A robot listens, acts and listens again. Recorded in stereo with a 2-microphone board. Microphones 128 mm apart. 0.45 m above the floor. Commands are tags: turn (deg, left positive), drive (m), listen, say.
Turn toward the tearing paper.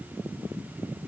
<listen/>
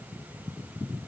<listen/>
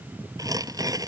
<turn deg="-30"/>
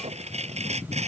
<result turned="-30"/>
<turn deg="-120"/>
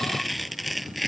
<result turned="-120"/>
<say>Found it: tearing paper, straight ahead.</say>